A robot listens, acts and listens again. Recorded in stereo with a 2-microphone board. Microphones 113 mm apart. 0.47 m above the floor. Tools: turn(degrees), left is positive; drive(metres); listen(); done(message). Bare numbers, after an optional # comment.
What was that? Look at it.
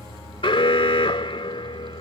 # The alarm: about 50° left or 130° left.
turn(50)
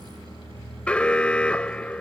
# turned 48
# So it is at 10° left.
turn(10)
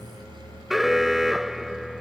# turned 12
done("Found it: an alarm, straight ahead.")